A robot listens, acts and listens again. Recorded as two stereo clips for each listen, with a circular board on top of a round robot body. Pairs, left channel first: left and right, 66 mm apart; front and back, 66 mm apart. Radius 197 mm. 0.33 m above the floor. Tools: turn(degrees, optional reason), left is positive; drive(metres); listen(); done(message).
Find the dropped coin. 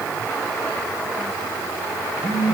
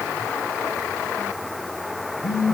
listen()
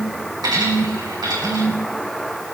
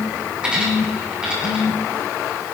turn(degrees=-105, reason="The dropped coin: 105° right.")
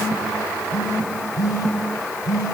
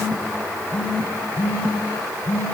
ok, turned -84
turn(degrees=-20, reason="Nothing new. It was at 20° right.")
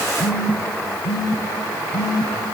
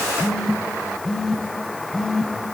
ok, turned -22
done("I heard a dropped coin from this way, but can't make it out now.")